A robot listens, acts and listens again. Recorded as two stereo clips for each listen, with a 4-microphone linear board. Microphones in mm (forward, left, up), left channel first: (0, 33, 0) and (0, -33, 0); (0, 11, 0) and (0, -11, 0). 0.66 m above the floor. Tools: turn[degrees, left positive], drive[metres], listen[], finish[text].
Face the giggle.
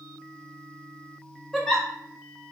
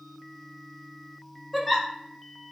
Action: turn[30]
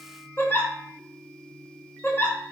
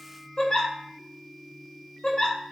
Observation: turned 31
Thought: So it is at 145° left.
Action: turn[145]
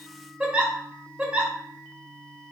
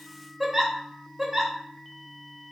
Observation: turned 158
Thought: The giggle is now 15° right.
Action: turn[-15]
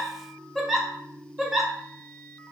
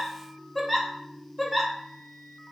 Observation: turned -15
Action: finish[Facing the giggle.]